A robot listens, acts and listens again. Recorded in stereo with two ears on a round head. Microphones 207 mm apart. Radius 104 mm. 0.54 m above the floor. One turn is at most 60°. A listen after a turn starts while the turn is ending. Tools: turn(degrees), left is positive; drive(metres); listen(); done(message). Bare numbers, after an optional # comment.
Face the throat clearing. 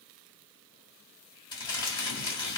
listen()
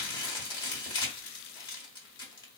listen()
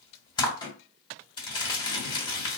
done("I can't make out throat clearing to turn to.")